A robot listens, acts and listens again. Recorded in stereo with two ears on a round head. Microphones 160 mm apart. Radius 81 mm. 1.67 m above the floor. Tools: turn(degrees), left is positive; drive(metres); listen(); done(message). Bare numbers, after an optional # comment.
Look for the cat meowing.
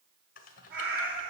# The cat meowing: about 65° right or 115° right.
turn(-65)
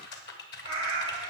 # So it is at 30° right.
turn(-30)
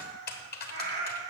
# The cat meowing is now 15° right.
turn(-15)
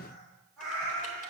done("Found it: a cat meowing, straight ahead, over 4 m away.")